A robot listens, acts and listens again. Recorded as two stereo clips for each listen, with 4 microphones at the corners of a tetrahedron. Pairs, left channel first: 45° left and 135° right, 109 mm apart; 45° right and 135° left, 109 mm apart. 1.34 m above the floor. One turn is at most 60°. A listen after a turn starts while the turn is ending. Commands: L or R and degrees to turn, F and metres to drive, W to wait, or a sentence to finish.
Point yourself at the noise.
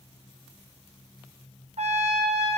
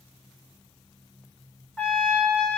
R60
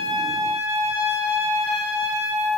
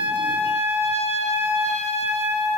R60
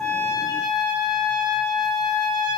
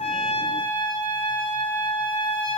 Facing the trumpet.